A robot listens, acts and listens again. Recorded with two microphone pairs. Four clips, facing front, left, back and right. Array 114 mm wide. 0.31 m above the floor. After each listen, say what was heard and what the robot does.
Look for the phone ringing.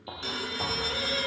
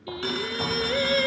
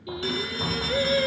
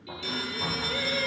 The phone ringing: 90° left. Turn 90° left.
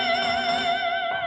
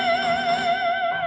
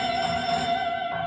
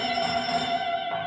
Keep listening.
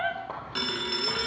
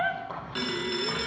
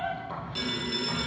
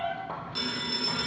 The phone ringing is now 15° left. Turn 15° left.
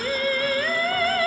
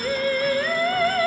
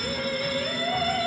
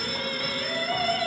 Found it: a phone ringing, straight ahead, 2 to 4 m away.